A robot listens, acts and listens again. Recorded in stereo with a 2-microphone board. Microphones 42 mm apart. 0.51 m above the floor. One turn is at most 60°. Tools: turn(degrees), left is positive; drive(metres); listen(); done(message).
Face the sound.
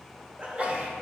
turn(degrees=-35)
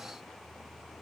listen()
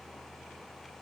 done("I heard a sneeze, but can't make it out now. It was about straight ahead or 110° right.")